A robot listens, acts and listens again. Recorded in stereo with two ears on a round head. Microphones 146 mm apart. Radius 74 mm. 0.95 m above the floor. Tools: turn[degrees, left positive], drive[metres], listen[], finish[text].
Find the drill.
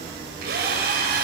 Thought: The drill: about 70° right or 110° right.
Action: turn[-70]
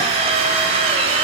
Thought: So it is at 40° right.
Action: turn[-40]
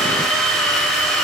Action: finish[Facing the drill.]